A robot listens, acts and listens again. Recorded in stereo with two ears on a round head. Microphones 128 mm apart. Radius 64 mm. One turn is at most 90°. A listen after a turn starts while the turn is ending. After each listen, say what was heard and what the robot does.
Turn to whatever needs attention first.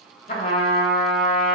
Keep listening.
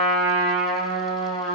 Keep listening.
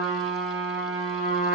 I can't make out anything urgent, only a trumpet.